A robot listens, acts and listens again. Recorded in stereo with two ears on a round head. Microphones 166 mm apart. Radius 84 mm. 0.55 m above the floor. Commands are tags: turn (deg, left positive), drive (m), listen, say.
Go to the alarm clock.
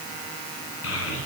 <listen/>
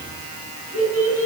<listen/>
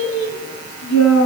<say>I can't make out an alarm clock to turn to.</say>